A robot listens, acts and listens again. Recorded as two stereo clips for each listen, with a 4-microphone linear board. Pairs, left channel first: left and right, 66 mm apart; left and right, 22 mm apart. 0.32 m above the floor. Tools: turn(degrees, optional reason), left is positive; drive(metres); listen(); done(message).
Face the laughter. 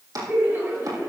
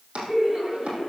turn(degrees=-35, reason="The laughter: about 35° right or 145° right.")
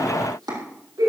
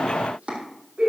turn(degrees=-110, reason="So it is at 110° right.")
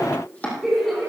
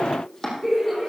done("Found it: laughter, straight ahead.")